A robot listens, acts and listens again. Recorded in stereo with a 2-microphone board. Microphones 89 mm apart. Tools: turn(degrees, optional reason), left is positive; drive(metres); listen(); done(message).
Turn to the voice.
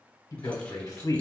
turn(degrees=45, reason="The man speaking: about 45° left or 135° left.")
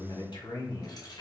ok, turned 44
turn(degrees=80, reason="So it is at 80° left.")
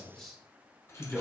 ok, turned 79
done("Facing the man speaking.")